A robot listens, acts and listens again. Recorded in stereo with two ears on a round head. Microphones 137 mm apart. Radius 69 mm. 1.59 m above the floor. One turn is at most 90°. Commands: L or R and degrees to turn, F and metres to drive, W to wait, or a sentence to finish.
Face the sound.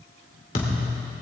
L50
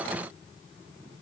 W
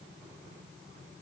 I heard a thud, but can't make it out now. It was about straight ahead or 80° left.